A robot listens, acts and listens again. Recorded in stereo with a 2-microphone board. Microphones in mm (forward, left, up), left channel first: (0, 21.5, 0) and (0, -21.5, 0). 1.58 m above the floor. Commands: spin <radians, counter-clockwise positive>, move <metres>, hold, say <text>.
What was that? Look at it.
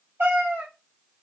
spin -1.13
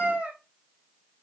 spin -0.44
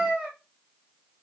spin -0.26
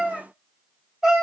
say Facing the cat meowing, 1 to 2 m away.